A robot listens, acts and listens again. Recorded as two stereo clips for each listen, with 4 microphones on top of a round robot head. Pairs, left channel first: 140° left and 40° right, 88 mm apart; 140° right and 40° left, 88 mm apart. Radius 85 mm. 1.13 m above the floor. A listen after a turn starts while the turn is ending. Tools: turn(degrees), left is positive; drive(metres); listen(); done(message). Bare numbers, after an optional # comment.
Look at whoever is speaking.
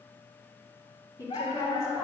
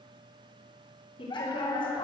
# The woman speaking: 165° right.
turn(-165)
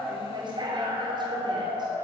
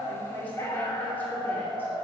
listen()
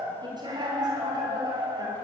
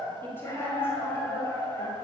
# The woman speaking is now 80° right.
turn(-80)
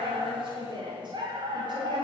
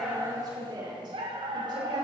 done("Found it: a woman speaking, straight ahead, over 4 m away.")